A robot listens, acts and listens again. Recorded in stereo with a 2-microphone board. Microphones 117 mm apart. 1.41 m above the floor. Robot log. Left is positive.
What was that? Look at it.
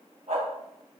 cmd yaw -90
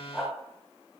end: Found it: a dog barking, straight ahead.